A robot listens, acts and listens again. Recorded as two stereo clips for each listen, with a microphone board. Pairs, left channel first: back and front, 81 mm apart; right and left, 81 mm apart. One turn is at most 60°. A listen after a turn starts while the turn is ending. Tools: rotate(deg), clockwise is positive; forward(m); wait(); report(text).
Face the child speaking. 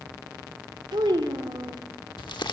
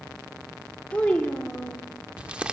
rotate(10)
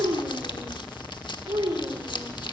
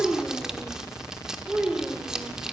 rotate(-15)
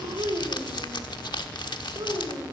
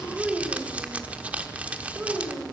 rotate(-15)
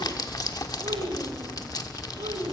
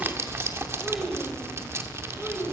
wait()
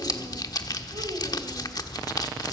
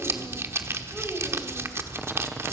wait()
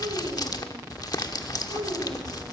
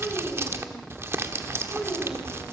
report("Found it: a child speaking, straight ahead, 2 to 4 m away.")